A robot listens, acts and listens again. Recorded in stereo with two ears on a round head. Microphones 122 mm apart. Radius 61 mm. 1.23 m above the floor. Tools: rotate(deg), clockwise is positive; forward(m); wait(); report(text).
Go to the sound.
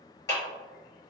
rotate(-25)
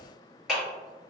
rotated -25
forward(1.0)
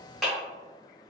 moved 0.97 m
forward(1.0)
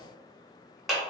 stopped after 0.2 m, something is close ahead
report("I am next to the clap.")